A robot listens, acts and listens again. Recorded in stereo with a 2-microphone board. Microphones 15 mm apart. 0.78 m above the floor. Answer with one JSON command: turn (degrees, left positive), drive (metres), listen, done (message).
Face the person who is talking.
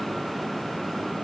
{"listen": true}
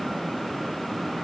{"listen": true}
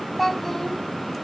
{"turn": 30}
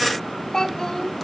{"turn": 135}
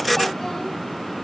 {"listen": true}
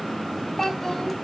{"turn": 35}
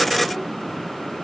{"listen": true}
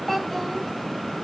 {"turn": 15}
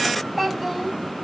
{"done": "Facing the child speaking, 2 to 4 m away."}